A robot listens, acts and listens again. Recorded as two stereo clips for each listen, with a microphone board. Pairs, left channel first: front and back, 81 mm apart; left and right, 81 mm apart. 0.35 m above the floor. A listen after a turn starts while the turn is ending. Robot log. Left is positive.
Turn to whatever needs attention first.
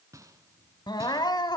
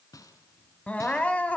note: The crying: 20° left.
cmd yaw +20
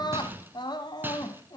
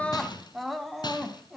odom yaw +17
end: Facing the crying.